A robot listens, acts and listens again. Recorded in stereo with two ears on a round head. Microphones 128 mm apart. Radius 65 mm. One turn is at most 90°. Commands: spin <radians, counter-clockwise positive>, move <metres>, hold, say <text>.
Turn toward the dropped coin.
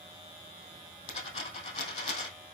spin 0.70
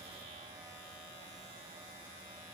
hold
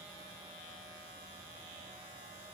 say I heard a dropped coin, but can't make it out now. It was about straight ahead or 100° left.